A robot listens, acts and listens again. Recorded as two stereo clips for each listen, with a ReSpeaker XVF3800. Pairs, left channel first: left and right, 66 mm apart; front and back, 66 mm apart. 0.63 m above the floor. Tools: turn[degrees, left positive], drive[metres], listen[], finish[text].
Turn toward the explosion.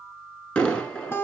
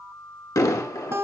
Thought: The explosion: 15° left.
Action: turn[15]
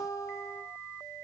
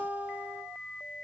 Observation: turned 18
Action: finish[Facing where the explosion came from. I can't hear it now.]